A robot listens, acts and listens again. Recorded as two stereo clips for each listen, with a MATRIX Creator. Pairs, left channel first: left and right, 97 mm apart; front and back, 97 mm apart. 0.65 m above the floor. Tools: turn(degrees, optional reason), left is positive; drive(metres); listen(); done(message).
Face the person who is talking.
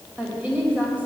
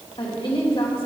turn(degrees=-15, reason="The woman speaking: 15° right.")
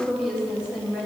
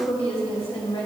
turn(degrees=-10, reason="The woman speaking is now 10° right.")
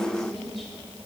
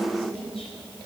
done("Facing the woman speaking.")